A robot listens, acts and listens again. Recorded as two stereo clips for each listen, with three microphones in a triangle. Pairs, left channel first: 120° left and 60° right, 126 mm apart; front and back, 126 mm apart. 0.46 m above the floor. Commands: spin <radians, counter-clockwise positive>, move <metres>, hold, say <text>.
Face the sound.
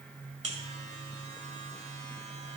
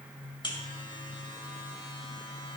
spin -0.87
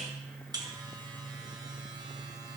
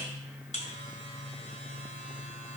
say Facing the buzzer, 1 to 2 m away.